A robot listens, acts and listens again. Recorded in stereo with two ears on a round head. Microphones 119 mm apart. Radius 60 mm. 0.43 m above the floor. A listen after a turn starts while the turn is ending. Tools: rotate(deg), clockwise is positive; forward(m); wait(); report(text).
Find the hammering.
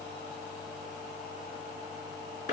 wait()
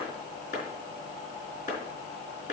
wait()
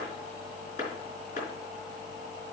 report("I can't make out hammering, only a clap.")